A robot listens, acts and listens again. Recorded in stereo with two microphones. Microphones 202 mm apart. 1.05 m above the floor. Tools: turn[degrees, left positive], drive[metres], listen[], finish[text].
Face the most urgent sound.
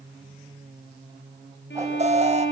Thought: The alarm: about 35° right or 145° right.
Action: turn[-35]
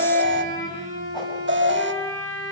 Thought: So it is at 110° right.
Action: turn[-110]
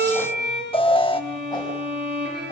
Thought: The alarm is now 25° left.
Action: turn[25]
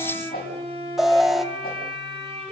Action: finish[Facing the alarm.]